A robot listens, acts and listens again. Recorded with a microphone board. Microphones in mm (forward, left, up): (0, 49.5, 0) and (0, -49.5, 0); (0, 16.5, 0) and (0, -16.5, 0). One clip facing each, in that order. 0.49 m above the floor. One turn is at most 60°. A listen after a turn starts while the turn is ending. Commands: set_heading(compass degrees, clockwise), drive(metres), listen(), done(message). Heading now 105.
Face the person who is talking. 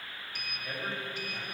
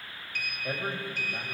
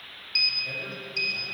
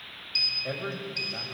set_heading(150)
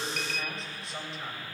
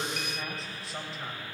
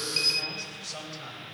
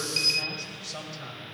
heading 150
done("Facing the man speaking.")